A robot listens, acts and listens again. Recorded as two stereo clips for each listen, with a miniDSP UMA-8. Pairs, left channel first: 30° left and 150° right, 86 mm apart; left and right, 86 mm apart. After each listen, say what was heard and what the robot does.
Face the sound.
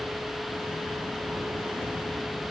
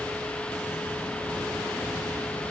Keep listening.
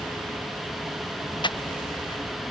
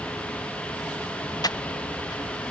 The breathing: 50° left. Turn 50° left.
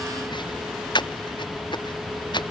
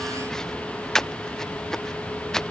Found it: breathing, straight ahead.